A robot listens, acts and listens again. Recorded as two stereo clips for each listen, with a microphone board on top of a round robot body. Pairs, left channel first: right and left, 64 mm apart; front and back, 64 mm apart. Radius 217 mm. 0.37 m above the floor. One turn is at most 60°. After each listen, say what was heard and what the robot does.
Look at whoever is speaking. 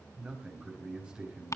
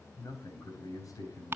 The man speaking: 15° left. Turn 15° left.
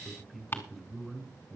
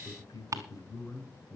Found it: a man speaking, straight ahead.